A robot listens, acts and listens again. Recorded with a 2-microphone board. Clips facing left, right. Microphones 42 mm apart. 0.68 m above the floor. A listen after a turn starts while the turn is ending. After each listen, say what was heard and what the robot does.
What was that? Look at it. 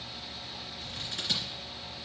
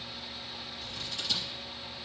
The scissors: about 60° left or 120° left. Turn 60° left.
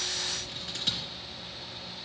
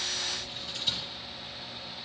So it is at 60° left. Turn 60° left.
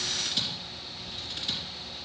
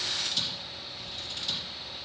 The scissors is now 25° left. Turn 25° left.
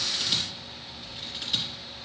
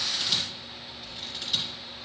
Facing the scissors, 2 to 4 m away.